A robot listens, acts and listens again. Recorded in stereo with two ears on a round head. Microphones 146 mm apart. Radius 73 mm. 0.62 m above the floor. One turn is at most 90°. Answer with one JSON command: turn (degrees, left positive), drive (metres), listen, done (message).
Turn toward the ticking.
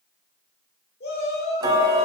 {"turn": -25}
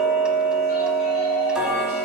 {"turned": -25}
{"done": "Found it: ticking, straight ahead."}